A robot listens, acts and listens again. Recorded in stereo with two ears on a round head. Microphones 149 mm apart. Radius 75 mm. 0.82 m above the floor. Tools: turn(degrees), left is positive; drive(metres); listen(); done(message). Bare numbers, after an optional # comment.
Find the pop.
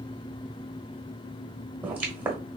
turn(-30)
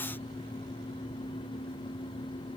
listen()
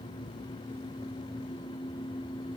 done("I heard a pop, but can't make it out now. It was about 20° left or 140° right.")